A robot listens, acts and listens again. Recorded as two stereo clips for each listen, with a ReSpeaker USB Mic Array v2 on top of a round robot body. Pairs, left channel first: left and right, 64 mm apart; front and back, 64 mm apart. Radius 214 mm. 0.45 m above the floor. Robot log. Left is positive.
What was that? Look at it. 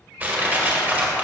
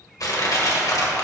note: The crushing: 25° right.
cmd yaw -25
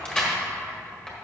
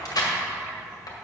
note: The crushing is now 10° left.
cmd yaw +10
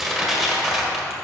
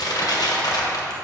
end: Facing the crushing.